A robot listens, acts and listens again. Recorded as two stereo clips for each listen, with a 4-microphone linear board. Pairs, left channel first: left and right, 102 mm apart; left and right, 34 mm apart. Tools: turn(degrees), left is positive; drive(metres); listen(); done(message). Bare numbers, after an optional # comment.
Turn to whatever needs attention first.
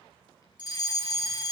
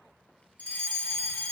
# The fire alarm: about 50° left or 130° left.
turn(50)
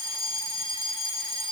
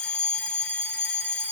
# So it is at 70° left.
turn(70)
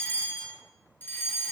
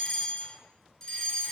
# The fire alarm is now 20° left.
turn(20)
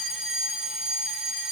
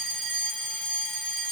done("Found it: a fire alarm, straight ahead, 2 to 4 m away.")